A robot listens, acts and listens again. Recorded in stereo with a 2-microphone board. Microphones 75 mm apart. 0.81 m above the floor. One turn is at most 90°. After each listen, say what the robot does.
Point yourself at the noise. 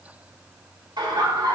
Turn 60° right.
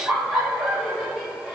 Found it: laughter, straight ahead, 2 to 4 m away.